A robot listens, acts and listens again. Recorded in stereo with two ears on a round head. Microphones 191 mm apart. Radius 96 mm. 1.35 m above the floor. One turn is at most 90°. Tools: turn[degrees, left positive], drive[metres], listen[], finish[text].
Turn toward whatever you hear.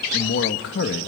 Thought: The man speaking: about 60° left or 120° left.
Action: turn[60]
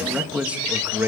Thought: So it is at 10° right.
Action: turn[-10]
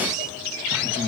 Thought: The man speaking is now 10° right.
Action: turn[-10]
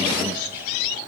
Action: listen[]
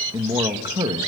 Thought: The man speaking is now 25° right.
Action: turn[-25]
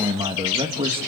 Thought: The man speaking is now 25° right.
Action: turn[-25]
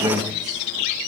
Thought: The man speaking is now 20° right.
Action: turn[-20]
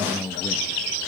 Action: finish[Facing the man speaking.]